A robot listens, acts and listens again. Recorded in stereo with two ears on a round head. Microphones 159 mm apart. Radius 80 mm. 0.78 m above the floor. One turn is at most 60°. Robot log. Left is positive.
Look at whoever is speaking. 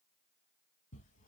cmd idle
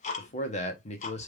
note: The man speaking: about 35° left or 145° left.
cmd yaw +35
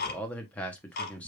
note: So it is at 10° left.
cmd yaw +10
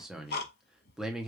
end: Facing the man speaking.